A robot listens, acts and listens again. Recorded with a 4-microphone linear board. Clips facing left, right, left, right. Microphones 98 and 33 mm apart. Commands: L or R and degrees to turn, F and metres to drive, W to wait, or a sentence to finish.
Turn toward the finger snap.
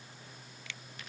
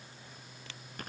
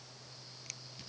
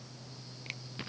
R40
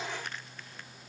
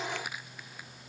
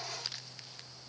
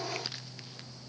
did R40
W
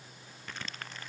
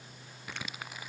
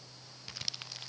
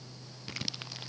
W
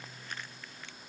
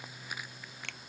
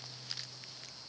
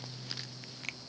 R100
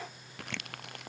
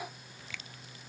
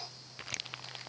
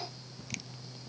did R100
W
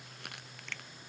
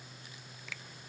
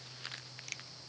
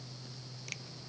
Found it: a finger snap, straight ahead.